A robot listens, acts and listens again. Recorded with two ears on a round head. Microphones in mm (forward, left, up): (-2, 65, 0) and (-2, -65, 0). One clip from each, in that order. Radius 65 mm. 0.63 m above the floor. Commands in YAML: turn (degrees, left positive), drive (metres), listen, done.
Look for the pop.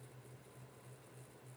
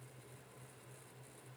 listen: true
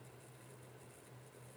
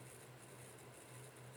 listen: true
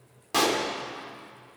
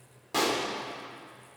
turn: 15
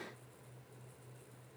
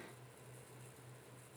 listen: true
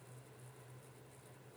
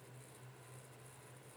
done: "I heard a pop, but can't make it out now. It was about straight ahead or 150° left."